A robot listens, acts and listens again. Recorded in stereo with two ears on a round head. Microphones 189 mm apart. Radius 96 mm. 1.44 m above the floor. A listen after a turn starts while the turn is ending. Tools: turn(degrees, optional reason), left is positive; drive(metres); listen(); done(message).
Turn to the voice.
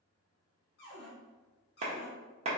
listen()
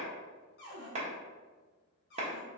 listen()
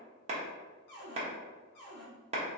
done("I can't make out anyone speaking to turn to.")